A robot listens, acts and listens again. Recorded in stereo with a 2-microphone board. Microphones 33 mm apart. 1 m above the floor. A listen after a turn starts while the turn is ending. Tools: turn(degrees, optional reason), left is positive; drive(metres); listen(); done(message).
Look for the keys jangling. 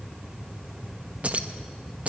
turn(degrees=-40, reason="The keys jangling: about 40° right or 140° right.")
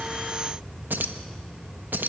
turn(degrees=-100, reason="So it is at 100° right.")
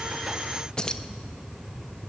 turn(degrees=25, reason="The keys jangling is now 25° left.")
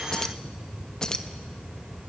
turn(degrees=20, reason="The keys jangling is now 20° left.")
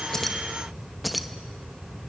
done("Found it: keys jangling, straight ahead, under 1 m away.")